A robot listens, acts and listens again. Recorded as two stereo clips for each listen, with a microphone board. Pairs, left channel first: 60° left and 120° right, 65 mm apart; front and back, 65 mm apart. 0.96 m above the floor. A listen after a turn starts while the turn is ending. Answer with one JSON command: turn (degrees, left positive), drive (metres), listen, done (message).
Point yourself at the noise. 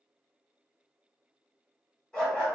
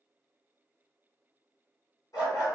{"turn": -20}
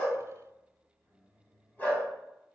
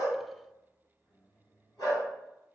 {"done": "Found it: a dog barking, straight ahead."}